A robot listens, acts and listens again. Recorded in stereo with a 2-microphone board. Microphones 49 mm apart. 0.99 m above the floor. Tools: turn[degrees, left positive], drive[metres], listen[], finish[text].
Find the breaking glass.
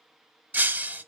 Thought: The breaking glass: about 35° right or 145° right.
Action: turn[-35]
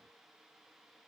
Action: listen[]
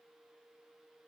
Action: finish[I heard breaking glass, but can't make it out now. It was about straight ahead or 110° right.]